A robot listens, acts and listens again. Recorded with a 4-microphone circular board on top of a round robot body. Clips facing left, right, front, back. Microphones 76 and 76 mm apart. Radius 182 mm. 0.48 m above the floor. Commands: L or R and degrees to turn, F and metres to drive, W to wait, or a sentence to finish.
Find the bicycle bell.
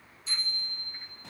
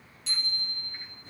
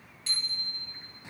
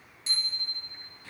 R110
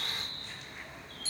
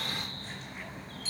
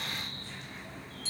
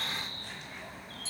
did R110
L30
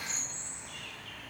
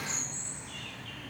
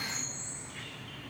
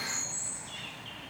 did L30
W
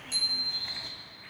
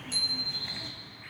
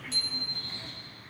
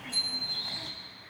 Facing the bicycle bell.